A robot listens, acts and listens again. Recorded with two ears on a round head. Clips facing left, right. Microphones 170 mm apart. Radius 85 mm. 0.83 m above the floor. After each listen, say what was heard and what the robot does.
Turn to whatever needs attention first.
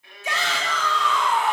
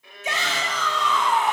The shout: about 20° right or 160° right. Turn 20° right.
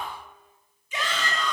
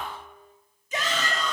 So it is at 140° right. Turn 140° right.
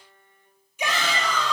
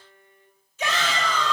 The shout is now 15° left. Turn 15° left.
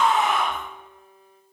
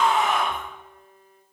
Found it: a shout, straight ahead.